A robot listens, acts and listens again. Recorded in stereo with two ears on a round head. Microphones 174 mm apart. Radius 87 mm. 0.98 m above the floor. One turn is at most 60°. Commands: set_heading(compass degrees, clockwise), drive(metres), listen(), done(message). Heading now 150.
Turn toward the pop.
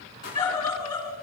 set_heading(95)
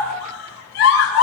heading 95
listen()
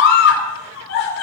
done("I heard a pop, but can't make it out now. It was about straight ahead or 70° left.")